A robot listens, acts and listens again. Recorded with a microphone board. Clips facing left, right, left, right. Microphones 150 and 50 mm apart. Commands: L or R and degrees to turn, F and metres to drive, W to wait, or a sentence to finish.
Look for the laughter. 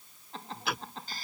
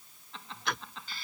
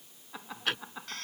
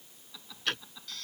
L40
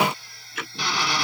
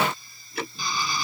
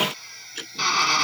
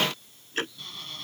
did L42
W
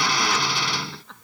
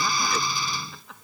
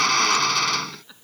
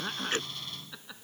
Found it: laughter, straight ahead.